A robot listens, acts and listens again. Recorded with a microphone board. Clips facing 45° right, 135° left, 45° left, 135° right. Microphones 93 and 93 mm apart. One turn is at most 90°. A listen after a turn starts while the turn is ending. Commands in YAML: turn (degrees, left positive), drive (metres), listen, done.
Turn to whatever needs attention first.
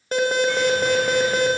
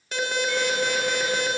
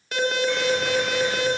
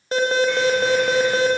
turn: -85
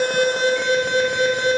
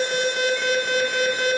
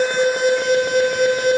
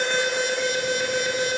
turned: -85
turn: 20
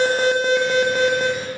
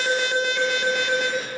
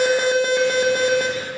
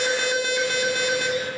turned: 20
done: "Facing the alarm, 1 to 2 m away."